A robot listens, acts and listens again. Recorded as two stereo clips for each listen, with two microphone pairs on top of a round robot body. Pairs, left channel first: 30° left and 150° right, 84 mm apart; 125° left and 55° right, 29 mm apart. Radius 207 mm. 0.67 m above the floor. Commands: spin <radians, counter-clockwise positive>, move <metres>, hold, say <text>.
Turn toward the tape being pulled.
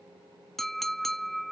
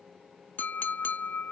hold
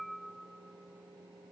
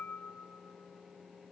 hold
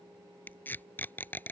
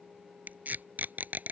spin -0.61
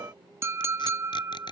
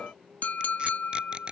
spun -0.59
say Found it: tape being pulled, straight ahead.